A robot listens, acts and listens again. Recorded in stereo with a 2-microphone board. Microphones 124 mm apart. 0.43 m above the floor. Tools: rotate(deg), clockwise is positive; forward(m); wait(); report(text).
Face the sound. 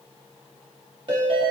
rotate(45)
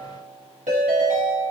rotate(90)
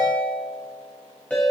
rotate(-10)
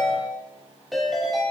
report("Facing the ringtone.")